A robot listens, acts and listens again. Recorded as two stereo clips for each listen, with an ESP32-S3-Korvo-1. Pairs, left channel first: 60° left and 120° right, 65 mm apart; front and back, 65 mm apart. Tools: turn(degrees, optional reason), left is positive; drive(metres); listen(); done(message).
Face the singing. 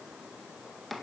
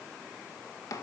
listen()
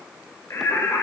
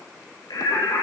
turn(degrees=20, reason="The singing: 20° left.")
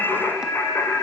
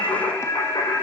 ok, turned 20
turn(degrees=10, reason="The singing is now 10° left.")
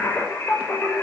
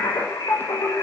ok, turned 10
done("Found it: singing, straight ahead, over 4 m away.")